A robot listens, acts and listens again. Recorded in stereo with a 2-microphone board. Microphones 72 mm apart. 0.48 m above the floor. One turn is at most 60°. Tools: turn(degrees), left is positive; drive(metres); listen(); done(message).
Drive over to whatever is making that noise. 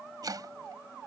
turn(degrees=-60)
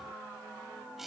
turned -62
drive(metres=1.0)
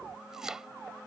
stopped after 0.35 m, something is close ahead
turn(degrees=-10)
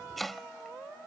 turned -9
done("Something is in my way. I am facing the chopping but have not reached it.")